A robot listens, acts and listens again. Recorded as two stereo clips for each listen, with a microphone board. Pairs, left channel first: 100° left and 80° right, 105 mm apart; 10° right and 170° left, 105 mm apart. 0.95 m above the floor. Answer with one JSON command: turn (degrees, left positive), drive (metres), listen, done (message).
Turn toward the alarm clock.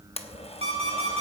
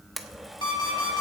{"turn": -55}
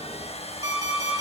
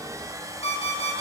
{"turn": -25}
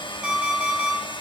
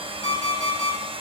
{"done": "Found it: an alarm clock, straight ahead, over 4 m away."}